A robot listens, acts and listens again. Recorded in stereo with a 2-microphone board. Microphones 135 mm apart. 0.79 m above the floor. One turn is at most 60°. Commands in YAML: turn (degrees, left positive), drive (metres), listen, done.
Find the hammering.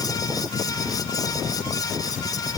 listen: true
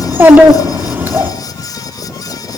listen: true
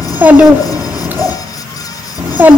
done: "I can't make out hammering to turn to."